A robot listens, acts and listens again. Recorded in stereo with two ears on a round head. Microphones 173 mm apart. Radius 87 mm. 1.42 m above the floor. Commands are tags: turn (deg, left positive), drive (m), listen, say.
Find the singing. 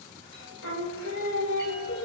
<turn deg="90"/>
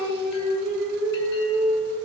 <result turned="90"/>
<turn deg="-20"/>
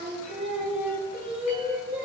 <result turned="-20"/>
<turn deg="-10"/>
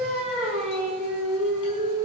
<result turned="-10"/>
<say>Facing the singing.</say>